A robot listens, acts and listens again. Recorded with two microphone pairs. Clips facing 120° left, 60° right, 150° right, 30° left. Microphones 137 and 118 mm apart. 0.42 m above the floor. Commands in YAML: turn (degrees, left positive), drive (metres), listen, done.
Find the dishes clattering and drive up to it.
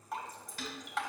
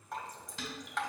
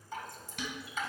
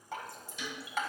turn: -130
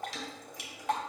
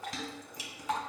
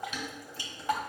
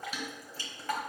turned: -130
turn: -25
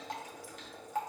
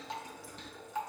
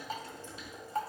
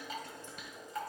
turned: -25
listen: true
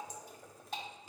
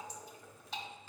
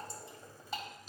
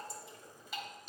drive: 1.0
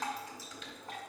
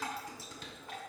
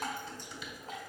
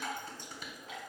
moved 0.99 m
turn: -10
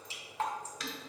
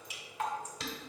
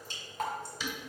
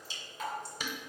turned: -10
drive: 1.0
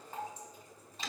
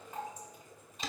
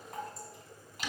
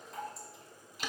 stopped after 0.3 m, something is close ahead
done: "Arrived at the dishes clattering, straight ahead."